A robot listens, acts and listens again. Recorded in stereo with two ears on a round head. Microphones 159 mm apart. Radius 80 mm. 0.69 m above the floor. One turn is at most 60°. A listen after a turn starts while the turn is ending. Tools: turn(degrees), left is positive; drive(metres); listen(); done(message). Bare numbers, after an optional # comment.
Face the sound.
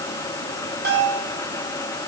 # The bell: about 60° right or 120° right.
turn(-60)
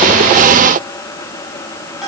done("Found it: a bell, straight ahead.")